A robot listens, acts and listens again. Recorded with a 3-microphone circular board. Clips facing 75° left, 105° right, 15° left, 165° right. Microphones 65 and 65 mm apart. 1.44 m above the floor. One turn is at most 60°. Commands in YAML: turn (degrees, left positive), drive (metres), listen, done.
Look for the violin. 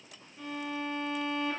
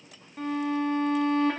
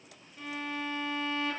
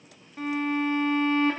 turn: -60
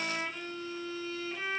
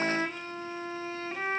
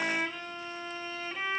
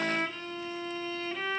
turn: -60
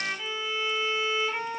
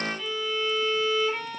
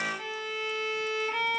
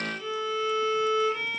done: "Found it: a violin, straight ahead, 1 to 2 m away."